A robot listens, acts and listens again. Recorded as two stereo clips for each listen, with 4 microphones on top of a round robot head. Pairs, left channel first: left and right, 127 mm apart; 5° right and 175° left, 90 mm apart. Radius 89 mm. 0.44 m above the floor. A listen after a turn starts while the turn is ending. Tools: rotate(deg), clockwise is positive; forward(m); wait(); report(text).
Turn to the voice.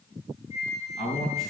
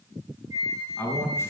rotate(-60)
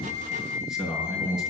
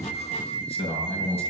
report("Facing the man speaking, over 4 m away.")